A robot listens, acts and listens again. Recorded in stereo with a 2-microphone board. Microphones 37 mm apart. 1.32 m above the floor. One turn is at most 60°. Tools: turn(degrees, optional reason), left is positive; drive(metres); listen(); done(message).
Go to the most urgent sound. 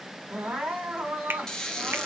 turn(degrees=-35, reason="The crying: about 35° right or 145° right.")
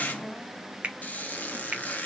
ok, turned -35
drive(metres=1.0)
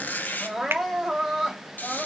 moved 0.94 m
drive(metres=1.0)
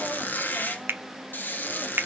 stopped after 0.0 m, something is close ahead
listen()
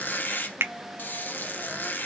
listen()
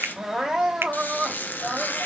done("Arrived at the crying, straight ahead.")